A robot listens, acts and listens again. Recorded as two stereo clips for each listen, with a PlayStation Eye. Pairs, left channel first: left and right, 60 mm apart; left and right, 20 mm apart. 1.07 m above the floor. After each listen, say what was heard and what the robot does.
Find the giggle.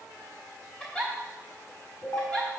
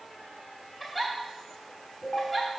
The giggle: about 15° left or 165° left. Turn 15° left.
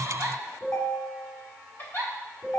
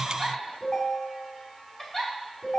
So it is at 145° left. Turn 145° left.
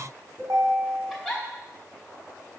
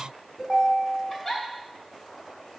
Found it: a giggle, straight ahead.